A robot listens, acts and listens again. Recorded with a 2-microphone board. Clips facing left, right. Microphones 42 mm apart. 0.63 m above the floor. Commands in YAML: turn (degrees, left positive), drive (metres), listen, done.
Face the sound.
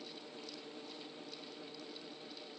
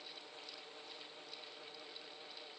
listen: true
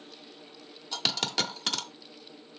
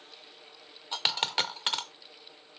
turn: -25
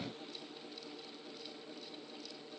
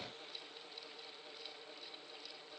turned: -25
listen: true
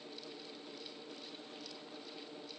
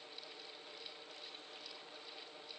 done: "I heard a dropped coin, but can't make it out now. It was about straight ahead or 130° right."